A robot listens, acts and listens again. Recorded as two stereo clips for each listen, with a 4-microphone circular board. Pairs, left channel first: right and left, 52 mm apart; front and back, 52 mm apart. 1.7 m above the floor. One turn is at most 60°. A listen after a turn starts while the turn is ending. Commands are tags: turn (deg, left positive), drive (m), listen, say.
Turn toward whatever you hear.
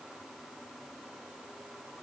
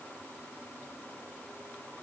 <listen/>
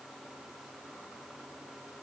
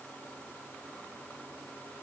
<listen/>
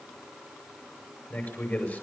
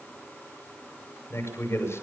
<turn deg="-35"/>
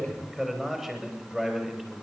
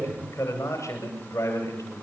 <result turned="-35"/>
<say>Found it: a man speaking, straight ahead.</say>